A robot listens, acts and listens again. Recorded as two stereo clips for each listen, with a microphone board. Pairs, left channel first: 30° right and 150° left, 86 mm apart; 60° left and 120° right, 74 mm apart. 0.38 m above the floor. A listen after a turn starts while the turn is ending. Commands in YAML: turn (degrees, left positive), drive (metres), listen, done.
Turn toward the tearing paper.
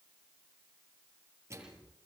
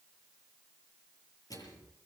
listen: true
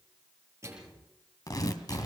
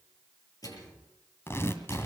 turn: 10
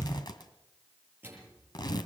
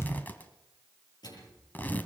done: "Found it: tearing paper, straight ahead."